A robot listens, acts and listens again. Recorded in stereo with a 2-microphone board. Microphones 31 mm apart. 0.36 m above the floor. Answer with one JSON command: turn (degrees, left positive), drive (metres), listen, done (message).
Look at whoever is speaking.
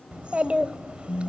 {"turn": -45}
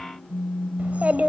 {"turn": -85}
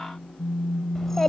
{"turn": 15}
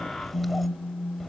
{"done": "Facing the child speaking, under 1 m away."}